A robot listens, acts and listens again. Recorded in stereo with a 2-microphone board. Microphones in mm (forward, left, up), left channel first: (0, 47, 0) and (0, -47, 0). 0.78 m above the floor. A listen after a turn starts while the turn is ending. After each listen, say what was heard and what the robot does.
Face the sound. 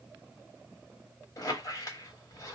The squeak: about 40° left or 140° left. Turn 40° left.
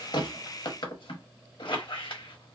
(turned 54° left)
So it is at 80° left. Turn 80° left.
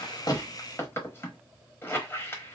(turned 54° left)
The squeak is now 30° left. Turn 30° left.
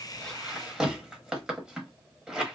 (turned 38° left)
The squeak is now 10° right. Turn 10° right.
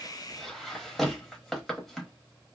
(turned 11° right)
Facing the squeak.